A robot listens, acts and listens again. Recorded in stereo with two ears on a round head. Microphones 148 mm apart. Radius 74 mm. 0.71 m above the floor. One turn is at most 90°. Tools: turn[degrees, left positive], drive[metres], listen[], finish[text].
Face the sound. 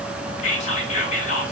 Thought: The whispering: about 45° left or 135° left.
Action: turn[45]
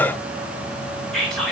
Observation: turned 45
Action: finish[Found it: whispering, straight ahead, 2 to 4 m away.]